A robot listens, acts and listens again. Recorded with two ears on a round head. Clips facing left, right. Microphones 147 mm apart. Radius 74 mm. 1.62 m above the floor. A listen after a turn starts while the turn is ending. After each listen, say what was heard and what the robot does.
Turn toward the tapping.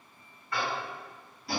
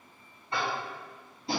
The tapping: about 25° right or 155° right. Turn 25° right.
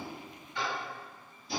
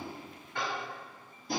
So it is at 130° right. Turn 130° right.
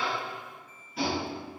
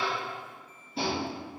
The tapping is now 25° right. Turn 25° right.
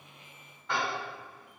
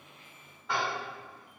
Facing the tapping, 1 to 2 m away.